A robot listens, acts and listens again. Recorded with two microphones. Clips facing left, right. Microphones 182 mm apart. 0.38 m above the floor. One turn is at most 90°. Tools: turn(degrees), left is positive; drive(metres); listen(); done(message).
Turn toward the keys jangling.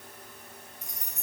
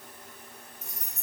turn(degrees=30)
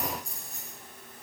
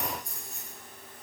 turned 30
turn(degrees=90)
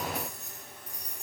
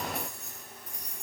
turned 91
turn(degrees=35)
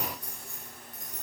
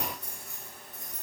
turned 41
turn(degrees=-10)
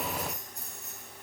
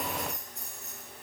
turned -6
done("Found it: keys jangling, straight ahead.")